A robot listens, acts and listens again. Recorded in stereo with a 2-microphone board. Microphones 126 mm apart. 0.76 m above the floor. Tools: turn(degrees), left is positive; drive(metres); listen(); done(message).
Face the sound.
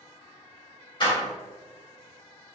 turn(degrees=40)
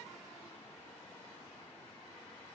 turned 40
listen()
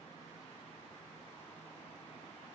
done("I heard a door slam, but can't make it out now. It was about straight ahead or 100° left.")